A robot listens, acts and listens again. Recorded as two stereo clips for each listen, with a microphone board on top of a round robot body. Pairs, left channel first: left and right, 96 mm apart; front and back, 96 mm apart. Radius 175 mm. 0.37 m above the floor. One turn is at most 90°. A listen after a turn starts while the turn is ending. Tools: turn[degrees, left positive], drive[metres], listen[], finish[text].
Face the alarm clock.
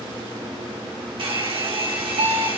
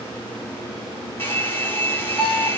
Thought: The alarm clock: 100° right.
Action: turn[-90]
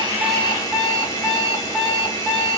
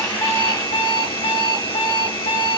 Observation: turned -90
Action: finish[Found it: an alarm clock, straight ahead.]